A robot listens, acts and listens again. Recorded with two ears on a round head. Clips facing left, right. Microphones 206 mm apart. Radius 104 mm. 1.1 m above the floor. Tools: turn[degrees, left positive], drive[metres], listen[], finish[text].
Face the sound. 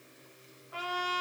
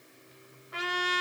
Thought: The trumpet: about 30° right or 150° right.
Action: turn[-30]
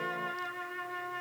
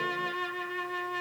Thought: So it is at 120° right.
Action: turn[-120]
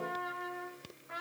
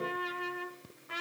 Thought: The trumpet is now 45° right.
Action: turn[-45]
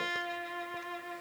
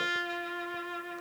Thought: The trumpet is now 15° right.
Action: turn[-15]
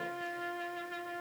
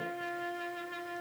Action: finish[Facing the trumpet, 1 to 2 m away.]